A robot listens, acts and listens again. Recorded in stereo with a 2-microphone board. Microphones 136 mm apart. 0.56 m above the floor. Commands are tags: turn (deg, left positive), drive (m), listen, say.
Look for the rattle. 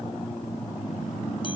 <listen/>
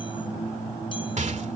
<turn deg="-60"/>
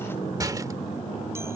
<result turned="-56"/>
<turn deg="-30"/>
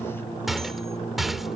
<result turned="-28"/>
<say>Facing the rattle.</say>